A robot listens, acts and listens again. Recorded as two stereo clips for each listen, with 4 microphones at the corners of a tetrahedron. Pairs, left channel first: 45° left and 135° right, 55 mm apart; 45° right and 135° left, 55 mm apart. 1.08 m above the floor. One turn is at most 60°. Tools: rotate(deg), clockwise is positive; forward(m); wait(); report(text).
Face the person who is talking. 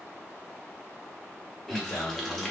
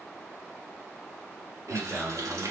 rotate(-60)
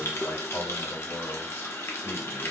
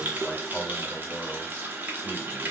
rotate(-40)
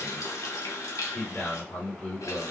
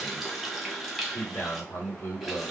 report("Facing the man speaking.")